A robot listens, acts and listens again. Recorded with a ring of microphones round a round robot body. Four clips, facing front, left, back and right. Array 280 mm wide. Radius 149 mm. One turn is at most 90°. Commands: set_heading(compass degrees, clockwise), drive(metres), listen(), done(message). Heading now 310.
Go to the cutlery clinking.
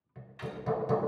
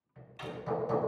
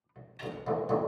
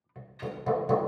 set_heading(220)
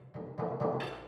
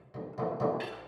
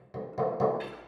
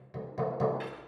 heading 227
set_heading(187)
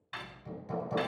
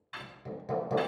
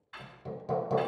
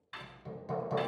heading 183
drive(1.0)
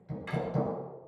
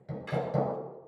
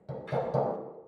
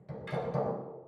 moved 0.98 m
set_heading(193)
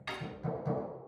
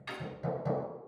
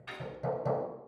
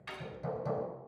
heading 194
drive(1.0)
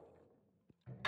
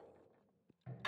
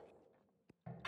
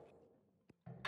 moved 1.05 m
drive(1.0)
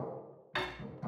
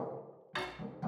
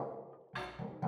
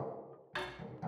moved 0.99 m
drive(1.0)
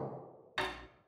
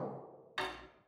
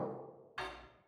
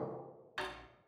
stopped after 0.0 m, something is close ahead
done("Arrived at the cutlery clinking, straight ahead.")